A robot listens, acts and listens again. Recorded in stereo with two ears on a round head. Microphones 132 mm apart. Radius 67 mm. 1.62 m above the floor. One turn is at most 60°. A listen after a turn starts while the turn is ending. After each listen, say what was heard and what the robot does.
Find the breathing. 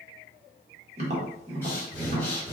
Turn 30° left.
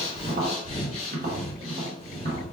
So it is at 135° left. Turn 60° left.
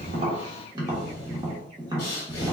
The breathing is now 70° left. Turn 60° left.
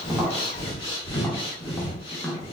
The breathing is now 35° left. Turn 35° left.
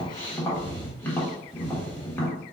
The breathing is now 20° left. Turn 20° left.
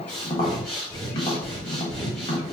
Found it: breathing, straight ahead.